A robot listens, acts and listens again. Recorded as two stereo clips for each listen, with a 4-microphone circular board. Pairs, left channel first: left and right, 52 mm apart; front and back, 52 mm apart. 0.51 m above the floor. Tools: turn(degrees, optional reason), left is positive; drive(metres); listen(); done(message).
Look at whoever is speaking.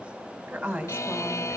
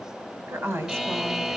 turn(degrees=-155, reason="The woman speaking: 155° right.")
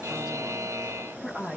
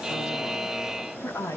turn(degrees=-20, reason="The woman speaking is now 20° right.")
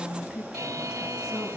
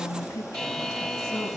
done("Found it: a woman speaking, straight ahead, over 4 m away.")